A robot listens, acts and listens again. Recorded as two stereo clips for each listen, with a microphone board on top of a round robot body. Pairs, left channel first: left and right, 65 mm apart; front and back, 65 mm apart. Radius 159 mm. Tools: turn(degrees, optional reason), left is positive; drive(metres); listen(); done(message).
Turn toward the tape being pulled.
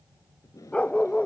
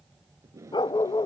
turn(degrees=130, reason="The tape being pulled: 130° left.")
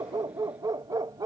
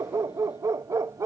listen()
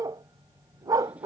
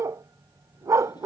listen()
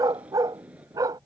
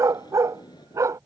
turn(degrees=-20, reason="The tape being pulled is now 20° right.")
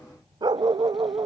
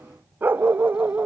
listen()
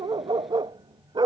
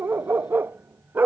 listen()
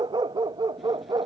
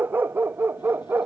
done("Facing where the tape being pulled came from. I can't hear it now.")